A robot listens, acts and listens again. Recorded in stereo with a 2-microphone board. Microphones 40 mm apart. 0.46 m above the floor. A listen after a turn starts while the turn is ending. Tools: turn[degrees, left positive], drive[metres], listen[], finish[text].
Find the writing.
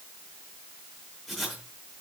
Action: turn[30]
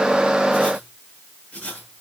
Thought: So it is at 150° left.
Action: turn[150]
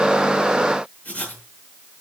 Thought: The writing is now 40° left.
Action: turn[40]
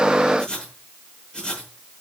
Thought: The writing is now 20° left.
Action: turn[20]
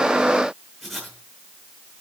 Action: finish[Facing the writing.]